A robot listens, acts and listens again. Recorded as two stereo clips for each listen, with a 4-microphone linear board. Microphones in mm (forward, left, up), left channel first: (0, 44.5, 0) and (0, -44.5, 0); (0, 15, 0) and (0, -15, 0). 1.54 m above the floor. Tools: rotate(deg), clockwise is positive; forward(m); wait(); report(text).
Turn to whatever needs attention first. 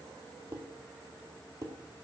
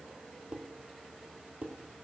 wait()
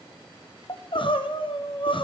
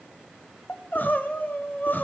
rotate(-65)
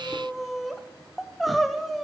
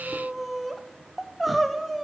report("Found it: crying, straight ahead, under 1 m away.")